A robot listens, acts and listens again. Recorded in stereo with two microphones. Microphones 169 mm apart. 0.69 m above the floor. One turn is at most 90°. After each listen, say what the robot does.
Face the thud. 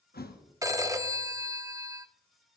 Turn 70° left.
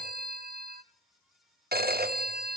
Keep listening.
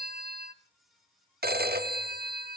I heard a thud, but can't make it out now. It was about straight ahead or 40° left.